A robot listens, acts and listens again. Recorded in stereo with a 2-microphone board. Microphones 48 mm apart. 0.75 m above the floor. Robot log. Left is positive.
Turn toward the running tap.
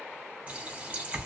note: The running tap: about 30° right or 150° right.
cmd yaw -30
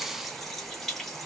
end: Found it: a running tap, straight ahead, 1 to 2 m away.